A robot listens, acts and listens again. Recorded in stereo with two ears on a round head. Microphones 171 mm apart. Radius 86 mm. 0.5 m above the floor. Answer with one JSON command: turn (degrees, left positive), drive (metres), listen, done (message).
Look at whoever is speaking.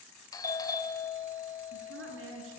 {"turn": -65}
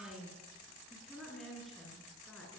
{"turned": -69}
{"done": "Facing the woman speaking."}